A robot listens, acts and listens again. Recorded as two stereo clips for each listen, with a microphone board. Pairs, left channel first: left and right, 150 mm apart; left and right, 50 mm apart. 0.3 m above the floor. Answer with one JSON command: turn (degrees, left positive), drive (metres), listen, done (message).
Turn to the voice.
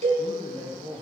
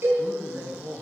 {"turn": -50}
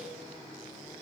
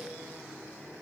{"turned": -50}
{"listen": true}
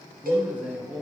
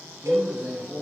{"turn": -10}
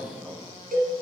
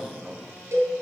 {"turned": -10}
{"done": "Found it: a man speaking, straight ahead."}